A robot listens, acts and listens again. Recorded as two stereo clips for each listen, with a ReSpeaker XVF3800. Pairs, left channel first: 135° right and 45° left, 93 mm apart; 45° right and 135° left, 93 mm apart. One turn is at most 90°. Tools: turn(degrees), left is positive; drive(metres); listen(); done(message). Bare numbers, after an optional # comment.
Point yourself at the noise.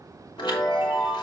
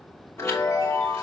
# The chime: 105° right.
turn(-90)
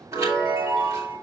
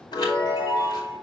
# The chime is now 10° right.
turn(-10)
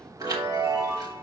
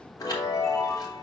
done("Facing the chime, 2 to 4 m away.")